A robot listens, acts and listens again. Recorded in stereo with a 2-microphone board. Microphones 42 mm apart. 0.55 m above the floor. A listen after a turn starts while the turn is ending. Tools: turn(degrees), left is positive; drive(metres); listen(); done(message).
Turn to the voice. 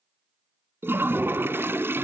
listen()
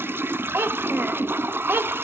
turn(degrees=-65)
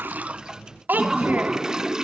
turn(degrees=-50)
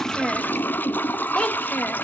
turn(degrees=25)
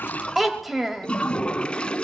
done("Found it: a child speaking, straight ahead.")